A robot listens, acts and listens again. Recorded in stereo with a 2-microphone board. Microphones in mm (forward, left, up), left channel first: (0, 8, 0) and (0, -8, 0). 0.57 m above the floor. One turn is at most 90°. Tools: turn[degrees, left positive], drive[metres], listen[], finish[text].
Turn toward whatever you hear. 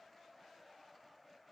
Action: listen[]
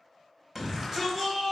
Action: turn[-30]
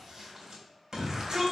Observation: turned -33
Thought: So it is at 145° right.
Action: turn[-90]
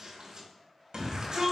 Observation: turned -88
Thought: The shout is now 55° right.
Action: turn[-55]
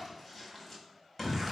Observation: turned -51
Action: finish[Facing the shout.]